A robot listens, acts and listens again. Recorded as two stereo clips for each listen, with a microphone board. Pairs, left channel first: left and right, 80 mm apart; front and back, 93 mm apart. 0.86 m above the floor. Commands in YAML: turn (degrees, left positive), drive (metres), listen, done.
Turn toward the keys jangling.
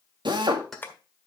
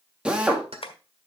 turn: 180
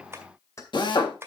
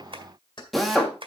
turn: 40
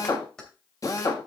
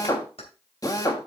turn: 10
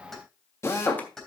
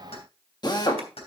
done: "Found it: keys jangling, straight ahead, 2 to 4 m away."